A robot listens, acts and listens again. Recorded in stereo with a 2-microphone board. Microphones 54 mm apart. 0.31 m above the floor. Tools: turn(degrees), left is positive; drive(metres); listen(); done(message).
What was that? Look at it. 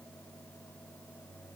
listen()
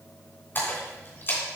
turn(degrees=40)
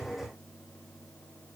listen()
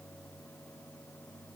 done("I heard a splash, but can't make it out now. It was about straight ahead or 100° left.")